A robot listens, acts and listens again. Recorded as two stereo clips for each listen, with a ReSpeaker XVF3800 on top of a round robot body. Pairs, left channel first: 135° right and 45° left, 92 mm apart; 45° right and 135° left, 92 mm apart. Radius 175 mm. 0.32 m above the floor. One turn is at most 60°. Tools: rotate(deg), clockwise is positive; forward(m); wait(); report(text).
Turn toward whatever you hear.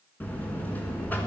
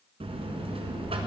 rotate(-60)
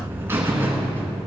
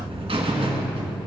rotate(-60)
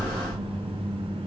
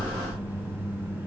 rotate(-60)
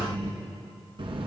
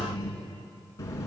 rotate(-15)
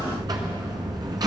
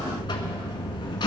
report("Facing the buzzer.")